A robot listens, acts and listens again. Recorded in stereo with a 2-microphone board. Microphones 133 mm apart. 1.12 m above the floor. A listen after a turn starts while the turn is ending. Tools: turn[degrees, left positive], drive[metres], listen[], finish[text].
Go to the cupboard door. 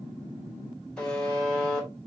Action: listen[]
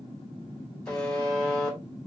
Action: listen[]
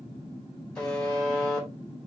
Action: finish[I can't make out a cupboard door, only a buzzer.]